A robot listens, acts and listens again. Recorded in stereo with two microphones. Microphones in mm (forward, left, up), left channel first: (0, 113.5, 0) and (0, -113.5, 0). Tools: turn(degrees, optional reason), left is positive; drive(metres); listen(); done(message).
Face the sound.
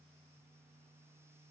listen()
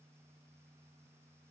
listen()
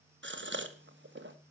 turn(degrees=-55, reason="The gasp: about 55° right or 125° right.")
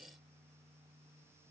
listen()
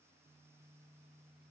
done("I heard a gasp, but can't make it out now. It was about straight ahead or 70° right.")